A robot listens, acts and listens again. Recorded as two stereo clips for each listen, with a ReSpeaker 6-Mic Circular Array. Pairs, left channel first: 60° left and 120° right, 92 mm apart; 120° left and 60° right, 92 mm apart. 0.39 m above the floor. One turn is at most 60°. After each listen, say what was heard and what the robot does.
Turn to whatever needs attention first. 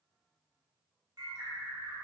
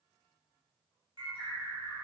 Keep listening.
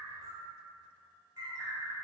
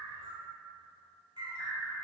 Keep listening.
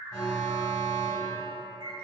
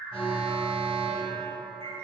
Facing the alarm, 1 to 2 m away.